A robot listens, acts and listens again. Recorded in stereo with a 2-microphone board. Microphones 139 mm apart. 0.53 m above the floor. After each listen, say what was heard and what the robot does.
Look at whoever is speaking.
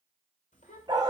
The child speaking: about 70° left or 110° left. Turn 70° left.
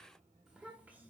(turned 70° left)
So it is at 15° right. Turn 15° right.
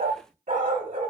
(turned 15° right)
Keep listening.
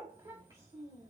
The child speaking is now 50° right. Turn 50° right.
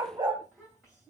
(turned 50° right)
The child speaking is now 10° right. Turn 10° right.
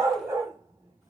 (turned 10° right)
Keep listening.
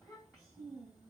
Found it: a child speaking, straight ahead.